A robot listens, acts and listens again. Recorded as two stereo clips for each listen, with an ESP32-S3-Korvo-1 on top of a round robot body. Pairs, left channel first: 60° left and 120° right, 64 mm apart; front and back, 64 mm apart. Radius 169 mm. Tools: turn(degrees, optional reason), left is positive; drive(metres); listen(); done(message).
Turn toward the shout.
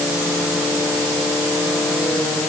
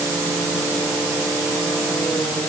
listen()
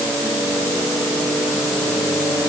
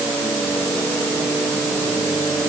listen()
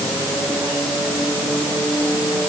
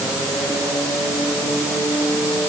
done("I can't make out a shout.")